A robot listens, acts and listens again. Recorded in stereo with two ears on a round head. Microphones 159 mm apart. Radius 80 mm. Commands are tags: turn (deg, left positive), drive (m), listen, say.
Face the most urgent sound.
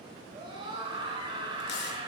<turn deg="-25"/>
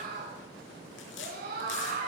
<turn deg="-125"/>
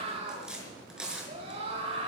<turn deg="-40"/>
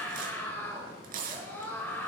<turn deg="10"/>
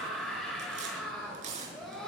<say>Found it: a scream, straight ahead, over 4 m away.</say>